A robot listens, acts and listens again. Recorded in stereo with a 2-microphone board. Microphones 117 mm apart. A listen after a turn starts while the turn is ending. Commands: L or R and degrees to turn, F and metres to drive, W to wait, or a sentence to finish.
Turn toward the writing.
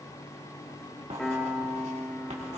R90
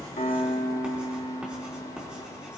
R10
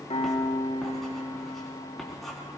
Found it: writing, straight ahead, 2 to 4 m away.